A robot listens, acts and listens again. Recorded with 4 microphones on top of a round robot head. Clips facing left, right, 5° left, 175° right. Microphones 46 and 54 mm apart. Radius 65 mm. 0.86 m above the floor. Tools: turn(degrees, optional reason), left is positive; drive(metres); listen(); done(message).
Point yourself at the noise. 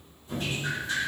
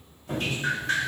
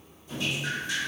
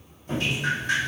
turn(degrees=-130, reason="The dripping: 130° right.")
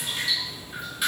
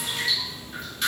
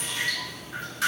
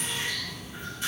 turn(degrees=10, reason="The dripping is now 10° left.")
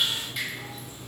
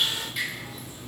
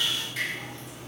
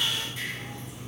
done("Facing the dripping, over 4 m away.")